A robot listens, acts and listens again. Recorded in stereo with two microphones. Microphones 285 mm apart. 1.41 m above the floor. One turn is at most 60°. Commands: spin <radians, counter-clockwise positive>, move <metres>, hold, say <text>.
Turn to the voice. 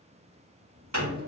spin -1.05
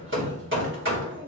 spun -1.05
spin -0.79
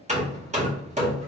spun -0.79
spin -0.52
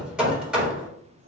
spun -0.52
spin -0.79
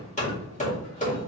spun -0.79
hold
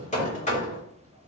spin -0.44
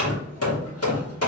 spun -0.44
hold
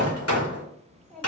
say Found it: a child speaking, straight ahead, 2 to 4 m away.